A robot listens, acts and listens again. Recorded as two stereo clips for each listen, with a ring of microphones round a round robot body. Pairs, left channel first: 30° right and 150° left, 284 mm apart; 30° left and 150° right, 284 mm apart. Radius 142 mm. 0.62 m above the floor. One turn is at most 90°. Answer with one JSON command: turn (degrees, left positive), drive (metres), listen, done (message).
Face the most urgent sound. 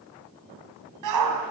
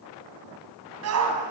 {"turn": 90}
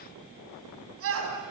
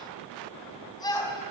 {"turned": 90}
{"turn": 90}
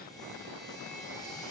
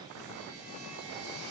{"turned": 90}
{"turn": 15}
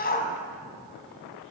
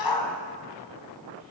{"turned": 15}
{"turn": 30}
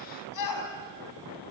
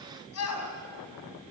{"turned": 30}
{"done": "Facing the shout, over 4 m away."}